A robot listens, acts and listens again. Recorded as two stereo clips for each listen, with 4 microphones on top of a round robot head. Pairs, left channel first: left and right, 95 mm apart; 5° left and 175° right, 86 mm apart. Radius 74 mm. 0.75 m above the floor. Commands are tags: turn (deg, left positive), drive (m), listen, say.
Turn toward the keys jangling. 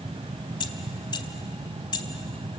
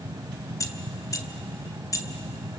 <turn deg="50"/>
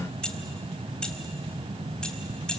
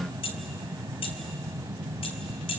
<turn deg="10"/>
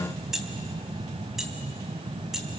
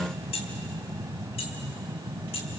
<say>Facing the keys jangling, 2 to 4 m away.</say>